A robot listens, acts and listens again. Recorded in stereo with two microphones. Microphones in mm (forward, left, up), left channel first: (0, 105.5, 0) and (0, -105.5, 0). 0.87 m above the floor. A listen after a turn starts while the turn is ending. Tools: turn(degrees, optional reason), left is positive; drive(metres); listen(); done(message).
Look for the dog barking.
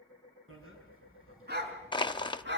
turn(degrees=-55, reason="The dog barking: about 55° right or 125° right.")
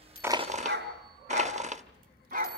turn(degrees=-40, reason="So it is at 40° right.")
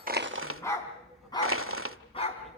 turn(degrees=25, reason="The dog barking is now 25° left.")
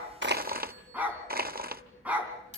turn(degrees=-10, reason="The dog barking is now 10° right.")
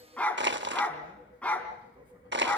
done("Facing the dog barking, 2 to 4 m away.")